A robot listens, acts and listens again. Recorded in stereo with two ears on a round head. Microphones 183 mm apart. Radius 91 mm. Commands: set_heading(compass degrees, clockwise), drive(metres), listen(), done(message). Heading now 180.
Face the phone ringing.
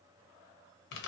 listen()
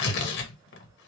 listen()
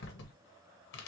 done("I can't make out a phone ringing, only tearing paper.")